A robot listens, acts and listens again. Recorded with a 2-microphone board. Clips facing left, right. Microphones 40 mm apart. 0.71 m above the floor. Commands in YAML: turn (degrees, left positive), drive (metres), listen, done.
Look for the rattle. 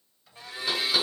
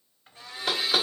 listen: true
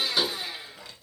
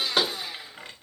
turn: -40
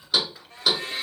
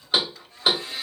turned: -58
turn: 15
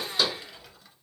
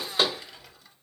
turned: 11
done: "Found it: a rattle, straight ahead, 1 to 2 m away."